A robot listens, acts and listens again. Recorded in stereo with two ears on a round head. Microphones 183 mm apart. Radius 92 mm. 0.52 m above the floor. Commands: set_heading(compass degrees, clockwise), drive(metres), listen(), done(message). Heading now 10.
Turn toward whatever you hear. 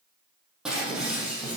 set_heading(40)
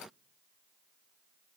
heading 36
listen()
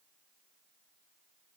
done("I heard breaking glass, but can't make it out now. It was about 20° left or 150° right.")